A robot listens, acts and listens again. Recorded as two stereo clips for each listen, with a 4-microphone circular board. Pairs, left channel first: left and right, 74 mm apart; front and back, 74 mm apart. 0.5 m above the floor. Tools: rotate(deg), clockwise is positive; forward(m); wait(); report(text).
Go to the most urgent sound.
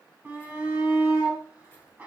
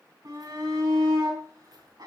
rotate(160)
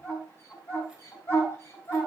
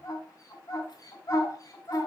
rotate(-35)
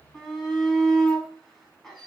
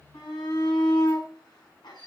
forward(1.0)
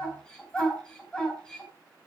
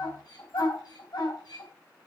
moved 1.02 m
rotate(-10)
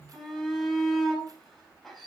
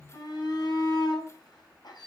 forward(1.0)
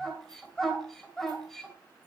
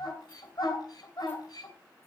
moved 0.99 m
forward(1.0)
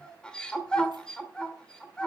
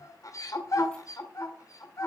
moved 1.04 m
rotate(-15)
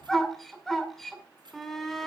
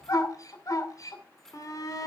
forward(1.0)
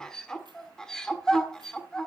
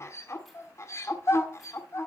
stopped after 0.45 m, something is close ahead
rotate(-15)
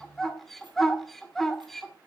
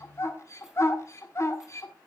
report("I am next to the shout.")